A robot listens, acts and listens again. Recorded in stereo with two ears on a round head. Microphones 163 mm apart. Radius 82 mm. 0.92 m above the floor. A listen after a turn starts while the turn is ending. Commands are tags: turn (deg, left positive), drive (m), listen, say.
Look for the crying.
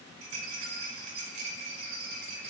<listen/>
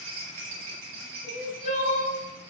<turn deg="45"/>
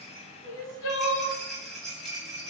<turn deg="85"/>
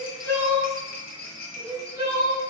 <turn deg="-25"/>
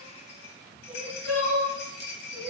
<say>Facing the crying.</say>